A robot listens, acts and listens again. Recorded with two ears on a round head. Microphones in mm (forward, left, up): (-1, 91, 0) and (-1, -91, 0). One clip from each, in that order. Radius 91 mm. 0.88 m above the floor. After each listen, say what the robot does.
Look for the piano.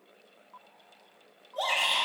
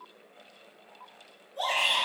Keep listening.
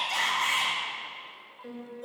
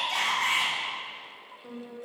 Turn 60° left.
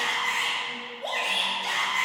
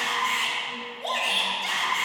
Keep listening.
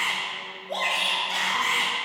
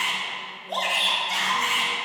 Keep listening.
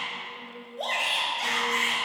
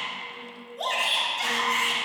Found it: a piano, straight ahead.